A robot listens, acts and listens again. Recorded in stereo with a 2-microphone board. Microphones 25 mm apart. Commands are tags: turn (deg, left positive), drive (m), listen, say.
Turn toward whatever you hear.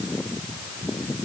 <listen/>
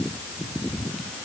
<listen/>
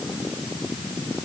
<say>I can't make out anything to turn to.</say>